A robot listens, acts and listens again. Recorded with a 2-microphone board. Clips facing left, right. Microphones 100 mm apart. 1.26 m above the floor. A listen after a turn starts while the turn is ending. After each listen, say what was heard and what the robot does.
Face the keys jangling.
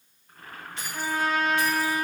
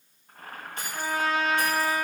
The keys jangling: about 50° right or 130° right. Turn 50° right.
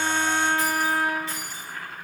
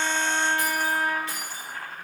So it is at 65° right. Turn 65° right.
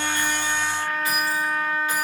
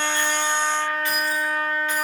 Keep listening.
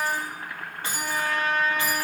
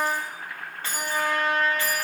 The keys jangling is now 15° left. Turn 15° left.
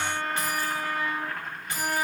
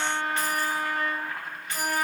The keys jangling is now 10° left. Turn 10° left.
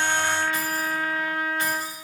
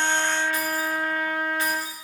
Keep listening.
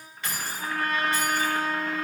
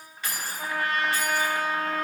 Found it: keys jangling, straight ahead, 2 to 4 m away.